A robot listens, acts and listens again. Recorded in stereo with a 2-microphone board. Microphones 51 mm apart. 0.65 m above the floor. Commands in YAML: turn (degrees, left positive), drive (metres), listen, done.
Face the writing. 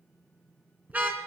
listen: true
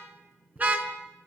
listen: true
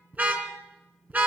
done: "I can't make out writing, only a car horn."